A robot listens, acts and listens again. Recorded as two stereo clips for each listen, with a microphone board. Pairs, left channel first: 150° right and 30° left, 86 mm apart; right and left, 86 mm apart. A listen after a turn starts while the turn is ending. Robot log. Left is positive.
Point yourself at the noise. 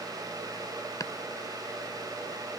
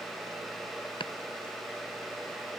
note: The chopping: 100° right.
cmd yaw -100
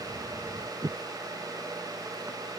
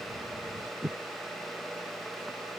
end: Found it: chopping, straight ahead.